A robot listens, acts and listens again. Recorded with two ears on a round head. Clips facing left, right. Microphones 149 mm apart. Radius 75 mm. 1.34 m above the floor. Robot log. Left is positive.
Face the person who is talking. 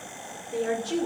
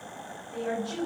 note: The woman speaking: about 60° left or 120° left.
cmd yaw +60
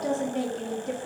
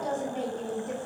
note: So it is at 65° left.
cmd yaw +65
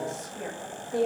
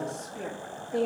end: Facing the woman speaking, 1 to 2 m away.